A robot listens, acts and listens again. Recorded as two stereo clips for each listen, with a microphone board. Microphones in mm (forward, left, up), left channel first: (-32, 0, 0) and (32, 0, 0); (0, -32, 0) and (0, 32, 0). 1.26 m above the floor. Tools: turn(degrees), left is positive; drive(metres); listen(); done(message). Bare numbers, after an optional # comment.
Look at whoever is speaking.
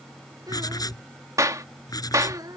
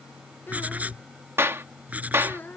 # The child speaking: 30° right.
turn(-30)
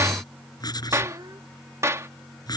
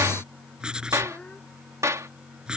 # The child speaking is now 20° right.
turn(-20)
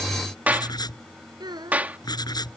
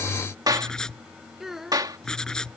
done("Facing the child speaking.")